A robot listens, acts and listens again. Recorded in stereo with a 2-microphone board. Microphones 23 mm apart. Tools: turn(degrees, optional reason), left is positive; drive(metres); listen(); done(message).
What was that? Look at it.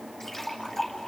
turn(degrees=25, reason="The splash: about 25° left or 155° left.")
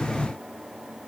listen()
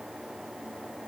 done("I heard a splash, but can't make it out now. It was about straight ahead or 130° left.")